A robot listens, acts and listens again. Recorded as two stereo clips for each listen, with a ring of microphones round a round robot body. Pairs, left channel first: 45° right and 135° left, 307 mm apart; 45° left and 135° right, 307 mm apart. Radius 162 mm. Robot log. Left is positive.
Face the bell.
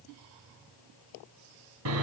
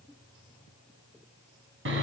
cmd idle
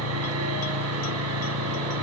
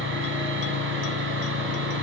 cmd idle
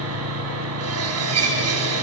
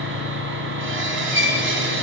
end: I can't make out a bell, only sawing.